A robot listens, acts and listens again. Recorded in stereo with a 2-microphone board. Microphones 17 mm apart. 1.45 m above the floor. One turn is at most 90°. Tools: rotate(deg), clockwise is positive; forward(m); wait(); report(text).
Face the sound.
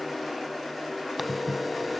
rotate(30)
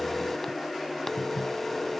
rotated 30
rotate(-20)
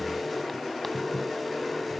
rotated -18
report("Facing the phone ringing.")